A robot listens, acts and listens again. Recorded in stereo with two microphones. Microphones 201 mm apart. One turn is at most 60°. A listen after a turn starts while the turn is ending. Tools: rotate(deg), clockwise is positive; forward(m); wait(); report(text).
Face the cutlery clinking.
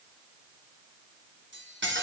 rotate(60)
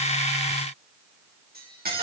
rotate(50)
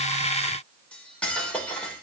report("Facing the cutlery clinking, 2 to 4 m away.")